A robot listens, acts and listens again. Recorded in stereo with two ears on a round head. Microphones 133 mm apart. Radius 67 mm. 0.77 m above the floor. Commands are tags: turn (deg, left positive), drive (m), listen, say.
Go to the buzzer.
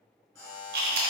<turn deg="20"/>
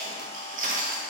<listen/>
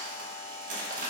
<drive m="1.0"/>
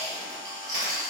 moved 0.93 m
<listen/>
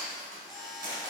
<drive m="1.0"/>
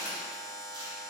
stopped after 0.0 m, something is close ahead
<say>I am next to the buzzer.</say>